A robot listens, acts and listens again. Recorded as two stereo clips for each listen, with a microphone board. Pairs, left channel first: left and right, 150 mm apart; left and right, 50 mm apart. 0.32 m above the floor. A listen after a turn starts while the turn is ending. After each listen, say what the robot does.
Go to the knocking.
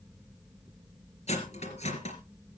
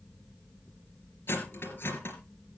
Keep listening.
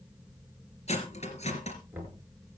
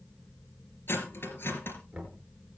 Turn 30° right.
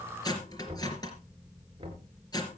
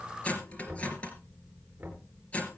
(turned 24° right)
Turn 145° right.
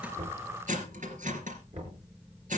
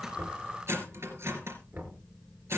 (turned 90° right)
Turn 55° right.
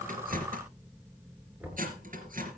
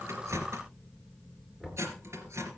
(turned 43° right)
Turn 10° right.
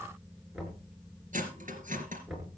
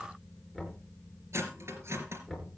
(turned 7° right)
Drive 1.0 m forward.
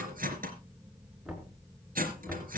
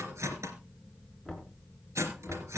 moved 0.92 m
Drive 1.0 m forward.
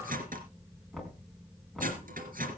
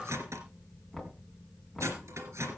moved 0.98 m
Drive 1.0 m forward.
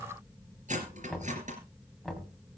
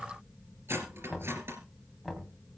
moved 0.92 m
Drive 1.0 m forward.
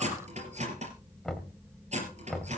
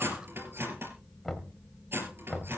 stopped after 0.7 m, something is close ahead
I am next to the knocking.